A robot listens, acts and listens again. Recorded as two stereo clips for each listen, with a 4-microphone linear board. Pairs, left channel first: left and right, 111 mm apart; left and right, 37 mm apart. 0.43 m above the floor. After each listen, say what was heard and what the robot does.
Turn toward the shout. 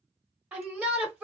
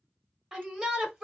Turn 30° right.
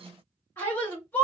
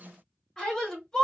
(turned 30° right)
So it is at 20° left. Turn 20° left.
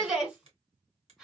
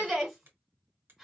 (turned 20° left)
Facing the shout, 1 to 2 m away.